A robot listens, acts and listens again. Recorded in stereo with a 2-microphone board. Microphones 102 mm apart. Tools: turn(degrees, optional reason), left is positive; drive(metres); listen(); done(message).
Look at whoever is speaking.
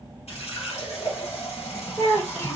turn(degrees=25, reason="The child speaking: about 25° left or 155° left.")
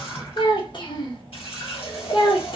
turn(degrees=130, reason="So it is at 130° left.")
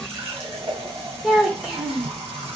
done("Found it: a child speaking, straight ahead.")